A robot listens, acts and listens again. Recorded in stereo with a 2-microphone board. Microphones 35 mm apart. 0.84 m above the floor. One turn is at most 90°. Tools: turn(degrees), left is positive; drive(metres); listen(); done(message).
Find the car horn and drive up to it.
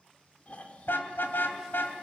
turn(degrees=90)
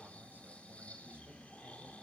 listen()
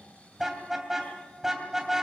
turn(degrees=-10)
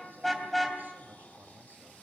drive(metres=1.0)
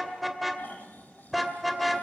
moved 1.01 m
drive(metres=1.0)
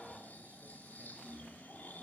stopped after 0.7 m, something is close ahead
listen()
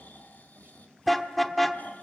done("I am next to the car horn.")